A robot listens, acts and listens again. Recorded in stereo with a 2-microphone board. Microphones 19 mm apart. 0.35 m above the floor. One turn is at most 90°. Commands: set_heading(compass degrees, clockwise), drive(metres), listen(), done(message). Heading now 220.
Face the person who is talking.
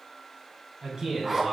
set_heading(260)
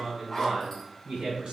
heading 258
set_heading(348)
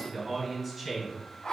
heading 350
done("Facing the man speaking.")